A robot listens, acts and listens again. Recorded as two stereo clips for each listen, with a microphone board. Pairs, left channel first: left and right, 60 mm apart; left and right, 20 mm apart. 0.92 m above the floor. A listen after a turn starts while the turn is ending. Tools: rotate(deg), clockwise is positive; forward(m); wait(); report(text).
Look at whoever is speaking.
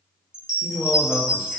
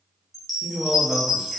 rotate(30)
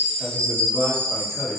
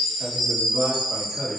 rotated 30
report("Facing the man speaking.")